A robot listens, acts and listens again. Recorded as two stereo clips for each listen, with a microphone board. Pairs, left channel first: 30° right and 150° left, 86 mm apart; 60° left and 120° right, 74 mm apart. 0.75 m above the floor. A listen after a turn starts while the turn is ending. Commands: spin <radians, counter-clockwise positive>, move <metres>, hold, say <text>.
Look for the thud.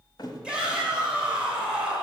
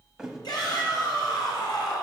spin -0.70
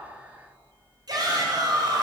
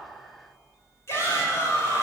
say I heard a thud from this way, but can't make it out now.